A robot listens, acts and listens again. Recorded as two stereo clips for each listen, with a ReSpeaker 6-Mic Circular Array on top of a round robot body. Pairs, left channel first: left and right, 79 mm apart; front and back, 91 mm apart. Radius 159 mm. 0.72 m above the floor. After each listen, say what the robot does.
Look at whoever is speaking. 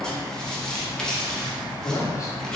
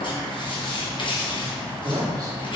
Turn 135° left.
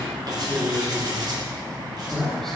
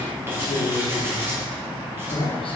Facing the man speaking.